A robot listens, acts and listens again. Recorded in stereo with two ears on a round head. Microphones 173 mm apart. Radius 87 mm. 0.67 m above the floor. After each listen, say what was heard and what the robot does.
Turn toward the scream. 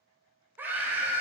Turn 30° right.
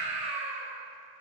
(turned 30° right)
So it is at 140° right. Turn 140° right.
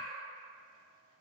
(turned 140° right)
Keep listening.
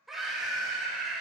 Found it: a scream, straight ahead, 2 to 4 m away.